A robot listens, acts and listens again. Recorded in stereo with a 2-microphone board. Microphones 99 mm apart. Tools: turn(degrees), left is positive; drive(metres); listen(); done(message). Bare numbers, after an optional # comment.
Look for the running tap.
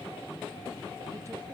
listen()
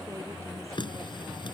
# The running tap: about 50° left or 130° left.
turn(50)
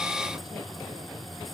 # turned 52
listen()
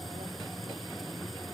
listen()
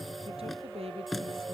done("Found it: a running tap, straight ahead.")